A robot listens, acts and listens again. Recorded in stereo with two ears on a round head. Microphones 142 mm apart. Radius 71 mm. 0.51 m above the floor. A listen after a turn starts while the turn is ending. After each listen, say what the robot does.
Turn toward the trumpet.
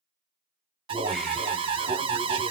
Keep listening.
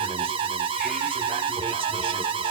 Keep listening.
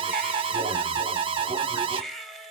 I can't make out a trumpet, only an alarm and a baby crying.